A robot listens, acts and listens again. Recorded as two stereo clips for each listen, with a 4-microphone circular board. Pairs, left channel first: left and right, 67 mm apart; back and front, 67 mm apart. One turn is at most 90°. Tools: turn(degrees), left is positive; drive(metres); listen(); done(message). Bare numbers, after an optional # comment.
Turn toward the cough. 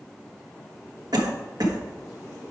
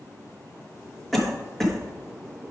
# The cough: 95° right.
turn(-90)
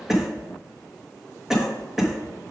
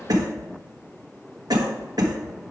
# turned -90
# The cough is now 10° right.
turn(-10)
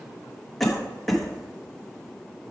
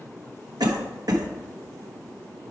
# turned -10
done("Found it: a cough, straight ahead, 1 to 2 m away.")